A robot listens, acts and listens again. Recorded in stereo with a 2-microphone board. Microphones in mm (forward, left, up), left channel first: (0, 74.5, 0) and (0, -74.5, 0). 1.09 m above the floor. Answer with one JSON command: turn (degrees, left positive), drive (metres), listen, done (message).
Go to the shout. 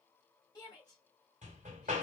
{"turn": 25}
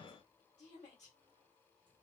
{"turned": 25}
{"turn": 130}
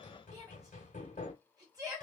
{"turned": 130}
{"turn": -25}
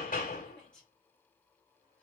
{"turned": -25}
{"drive": 1.0}
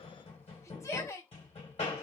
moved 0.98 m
{"turn": 20}
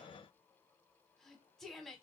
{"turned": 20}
{"drive": 1.0}
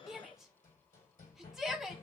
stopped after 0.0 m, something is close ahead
{"done": "I am next to the shout."}